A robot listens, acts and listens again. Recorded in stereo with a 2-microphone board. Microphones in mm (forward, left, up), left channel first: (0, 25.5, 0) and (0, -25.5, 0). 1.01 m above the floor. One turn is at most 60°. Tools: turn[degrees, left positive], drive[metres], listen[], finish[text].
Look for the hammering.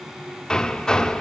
Action: turn[30]
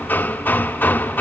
Thought: So it is at 135° left.
Action: turn[60]
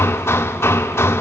Thought: The hammering is now 70° left.
Action: turn[60]
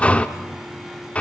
Thought: The hammering is now 30° left.
Action: turn[30]
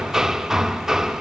Thought: The hammering is now 10° right.
Action: turn[-10]
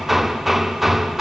Action: finish[Facing the hammering, under 1 m away.]